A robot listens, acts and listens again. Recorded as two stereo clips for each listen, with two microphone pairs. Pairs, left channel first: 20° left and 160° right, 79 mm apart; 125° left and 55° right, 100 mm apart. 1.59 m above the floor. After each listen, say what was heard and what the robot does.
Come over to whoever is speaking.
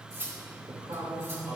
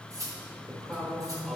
The man speaking: 150° right. Turn 150° right.
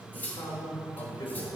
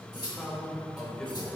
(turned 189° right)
The man speaking is now 40° left. Turn 40° left.
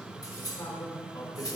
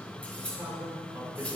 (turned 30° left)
The man speaking is now 10° left. Turn 10° left.
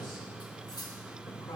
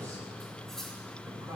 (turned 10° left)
Drive 1.0 m forward.
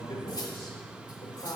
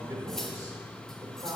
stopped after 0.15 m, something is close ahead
Something is in my way. I am facing the man speaking but have not reached it.